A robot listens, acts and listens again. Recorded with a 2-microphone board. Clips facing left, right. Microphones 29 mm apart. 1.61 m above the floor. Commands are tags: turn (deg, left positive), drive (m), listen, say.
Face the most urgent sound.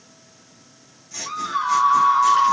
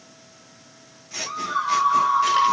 <turn deg="35"/>
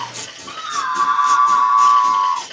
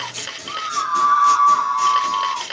<turn deg="105"/>
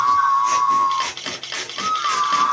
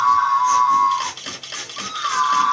<turn deg="-15"/>
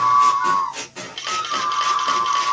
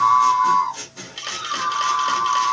<say>Facing the scream, 1 to 2 m away.</say>